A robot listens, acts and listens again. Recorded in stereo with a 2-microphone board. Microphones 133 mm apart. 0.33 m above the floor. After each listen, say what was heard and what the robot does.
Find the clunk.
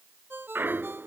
The clunk: about 15° right or 165° right. Turn 15° right.
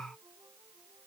Keep listening.
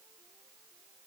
I heard a clunk, but can't make it out now. It was about straight ahead or 150° right.